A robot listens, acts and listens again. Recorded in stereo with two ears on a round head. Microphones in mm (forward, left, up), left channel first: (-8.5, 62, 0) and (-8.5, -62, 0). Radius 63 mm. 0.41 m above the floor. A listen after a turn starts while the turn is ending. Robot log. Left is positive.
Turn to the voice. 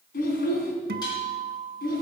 note: The child speaking: about 75° left or 105° left.
cmd yaw +75
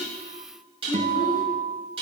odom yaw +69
cmd idle
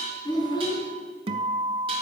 note: So it is at 30° left.
cmd yaw +30
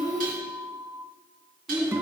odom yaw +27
end: Found it: a child speaking, straight ahead, 2 to 4 m away.